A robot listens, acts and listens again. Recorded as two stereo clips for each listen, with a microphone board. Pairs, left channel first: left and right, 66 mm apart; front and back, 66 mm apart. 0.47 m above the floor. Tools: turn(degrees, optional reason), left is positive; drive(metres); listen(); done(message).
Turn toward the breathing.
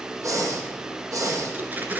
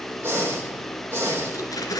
turn(degrees=-125, reason="The breathing: 125° right.")
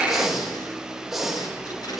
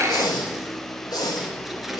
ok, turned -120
done("Facing the breathing.")